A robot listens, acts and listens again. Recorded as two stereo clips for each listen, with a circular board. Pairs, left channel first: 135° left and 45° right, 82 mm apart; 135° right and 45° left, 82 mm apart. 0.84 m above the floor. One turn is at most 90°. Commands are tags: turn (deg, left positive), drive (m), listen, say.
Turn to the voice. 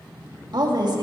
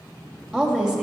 <turn deg="-35"/>
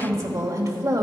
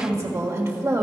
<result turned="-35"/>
<say>Found it: a woman speaking, straight ahead, 1 to 2 m away.</say>